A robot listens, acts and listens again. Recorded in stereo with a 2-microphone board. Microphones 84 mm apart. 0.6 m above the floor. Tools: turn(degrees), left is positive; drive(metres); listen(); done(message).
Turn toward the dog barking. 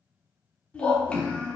turn(degrees=65)
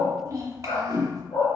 turn(degrees=85)
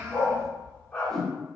turn(degrees=20)
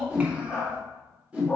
turn(degrees=10)
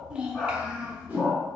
done("Facing the dog barking.")